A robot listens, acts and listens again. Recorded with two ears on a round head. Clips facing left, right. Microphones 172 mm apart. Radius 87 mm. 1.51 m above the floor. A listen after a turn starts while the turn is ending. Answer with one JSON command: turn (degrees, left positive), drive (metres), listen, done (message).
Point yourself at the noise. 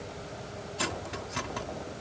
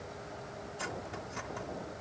{"turn": 90}
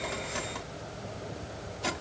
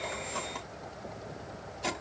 {"done": "Found it: cutlery clinking, straight ahead."}